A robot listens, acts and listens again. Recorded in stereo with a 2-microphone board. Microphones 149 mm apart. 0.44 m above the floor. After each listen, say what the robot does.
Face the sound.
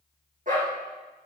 Turn 60° right.
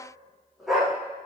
Found it: a dog barking, straight ahead, over 4 m away.